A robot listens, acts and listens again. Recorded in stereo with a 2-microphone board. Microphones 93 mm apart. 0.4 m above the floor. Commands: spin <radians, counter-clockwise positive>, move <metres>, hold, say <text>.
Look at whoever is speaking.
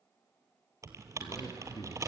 spin 0.87
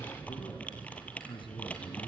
spin 1.13
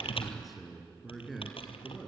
say Found it: a man speaking, straight ahead, over 4 m away.